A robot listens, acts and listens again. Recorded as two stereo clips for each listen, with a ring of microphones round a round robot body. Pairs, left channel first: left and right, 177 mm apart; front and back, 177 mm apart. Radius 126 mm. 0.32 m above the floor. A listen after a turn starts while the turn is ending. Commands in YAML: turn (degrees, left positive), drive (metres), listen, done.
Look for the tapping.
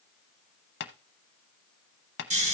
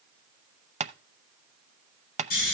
turn: 125
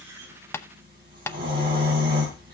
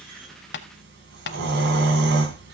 turn: 15
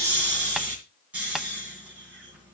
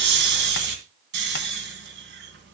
listen: true
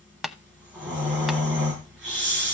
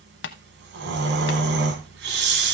done: "Facing the tapping."